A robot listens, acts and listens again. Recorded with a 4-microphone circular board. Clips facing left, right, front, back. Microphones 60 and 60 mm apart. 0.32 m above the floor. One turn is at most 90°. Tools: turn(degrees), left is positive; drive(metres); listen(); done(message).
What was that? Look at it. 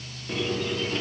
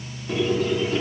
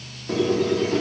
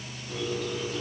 done("Found it: a squeak, straight ahead, 1 to 2 m away.")